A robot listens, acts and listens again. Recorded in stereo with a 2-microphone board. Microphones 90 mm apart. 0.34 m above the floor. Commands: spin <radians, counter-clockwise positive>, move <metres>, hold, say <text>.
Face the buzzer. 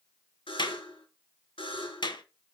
spin 1.31
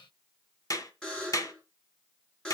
spin 0.17
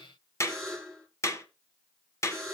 say Facing the buzzer, over 4 m away.